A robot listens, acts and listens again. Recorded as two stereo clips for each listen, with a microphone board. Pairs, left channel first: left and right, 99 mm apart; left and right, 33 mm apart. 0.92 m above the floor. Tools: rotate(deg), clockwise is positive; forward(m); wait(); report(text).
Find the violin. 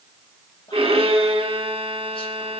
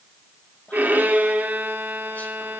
rotate(70)
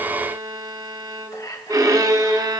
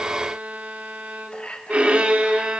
rotate(40)
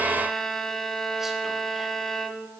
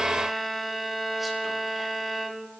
report("Facing the violin, 1 to 2 m away.")